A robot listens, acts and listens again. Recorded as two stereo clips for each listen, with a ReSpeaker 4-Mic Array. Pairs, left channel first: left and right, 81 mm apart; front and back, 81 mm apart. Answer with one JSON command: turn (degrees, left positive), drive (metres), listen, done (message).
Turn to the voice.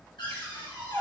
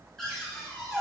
{"listen": true}
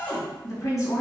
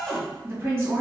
{"turn": 130}
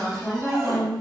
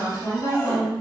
{"done": "Found it: a woman speaking, straight ahead, 1 to 2 m away."}